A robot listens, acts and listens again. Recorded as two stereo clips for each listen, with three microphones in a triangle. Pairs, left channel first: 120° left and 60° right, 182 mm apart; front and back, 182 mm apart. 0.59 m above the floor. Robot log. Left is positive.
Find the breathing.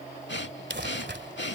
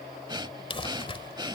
note: The breathing: 115° left.
cmd yaw +115
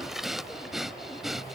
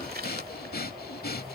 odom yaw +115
note: The breathing is now 30° left.
cmd yaw +30
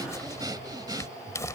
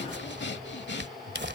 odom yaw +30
note: The breathing is now 10° left.
cmd yaw +10
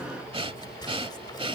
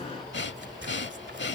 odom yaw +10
end: Found it: breathing, straight ahead.